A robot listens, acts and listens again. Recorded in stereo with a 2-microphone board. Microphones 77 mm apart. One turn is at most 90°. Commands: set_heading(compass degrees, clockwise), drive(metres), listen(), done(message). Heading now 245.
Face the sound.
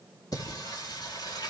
set_heading(180)
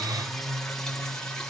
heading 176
set_heading(166)
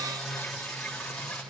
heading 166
done("Facing the singing, over 4 m away.")